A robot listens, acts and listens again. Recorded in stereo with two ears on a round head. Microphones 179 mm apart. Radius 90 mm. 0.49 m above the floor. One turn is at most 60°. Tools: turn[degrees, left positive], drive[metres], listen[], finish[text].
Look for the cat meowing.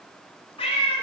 Thought: The cat meowing: about 30° left or 150° left.
Action: turn[30]
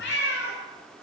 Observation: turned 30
Thought: So it is at 120° left.
Action: turn[60]
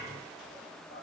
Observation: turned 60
Thought: Nothing new. It was at 60° left.
Action: turn[60]
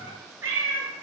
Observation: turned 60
Thought: The cat meowing is now 15° right.
Action: turn[-15]
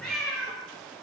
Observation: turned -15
Action: finish[Found it: a cat meowing, straight ahead, over 4 m away.]